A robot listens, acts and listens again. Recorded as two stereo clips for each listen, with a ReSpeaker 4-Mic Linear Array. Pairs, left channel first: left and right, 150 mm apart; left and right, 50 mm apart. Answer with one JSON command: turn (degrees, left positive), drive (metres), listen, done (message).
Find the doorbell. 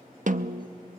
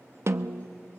{"listen": true}
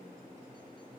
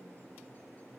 {"listen": true}
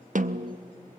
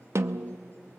{"done": "I can't make out a doorbell to turn to."}